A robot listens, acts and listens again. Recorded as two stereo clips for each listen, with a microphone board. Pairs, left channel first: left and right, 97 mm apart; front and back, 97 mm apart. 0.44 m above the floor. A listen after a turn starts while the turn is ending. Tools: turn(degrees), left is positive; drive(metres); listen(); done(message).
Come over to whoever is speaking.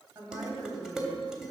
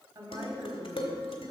turn(degrees=-135)
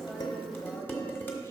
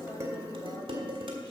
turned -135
listen()
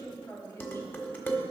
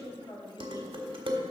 turn(degrees=30)
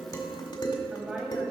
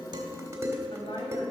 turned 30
turn(degrees=-10)
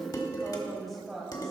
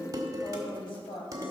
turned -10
drive(metres=1.0)
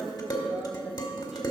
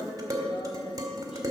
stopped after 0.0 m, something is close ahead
listen()
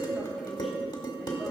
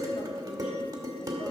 listen()
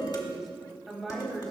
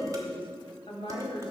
done("Blocked. The woman speaking is further on, straight ahead.")